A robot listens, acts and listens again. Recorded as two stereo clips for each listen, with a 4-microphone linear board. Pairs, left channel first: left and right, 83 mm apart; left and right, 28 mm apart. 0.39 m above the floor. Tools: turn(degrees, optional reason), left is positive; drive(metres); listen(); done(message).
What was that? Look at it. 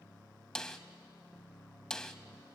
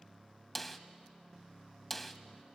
turn(degrees=30)
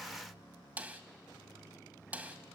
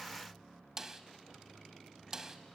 turn(degrees=-20, reason="So it is at 20° right.")
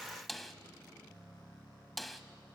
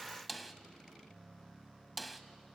done("Found it: a snare drum, straight ahead, 1 to 2 m away.")